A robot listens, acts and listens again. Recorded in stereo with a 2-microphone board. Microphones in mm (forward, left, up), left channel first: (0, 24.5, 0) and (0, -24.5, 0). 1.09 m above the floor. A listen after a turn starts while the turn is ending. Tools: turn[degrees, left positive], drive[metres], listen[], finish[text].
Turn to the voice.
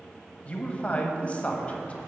Thought: The man speaking: about 30° left or 150° left.
Action: turn[30]
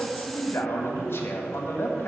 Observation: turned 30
Thought: So it is at 120° left.
Action: turn[120]
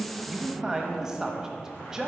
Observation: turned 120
Thought: The man speaking is now 15° right.
Action: turn[-15]
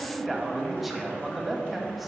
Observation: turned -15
Action: finish[Found it: a man speaking, straight ahead, 1 to 2 m away.]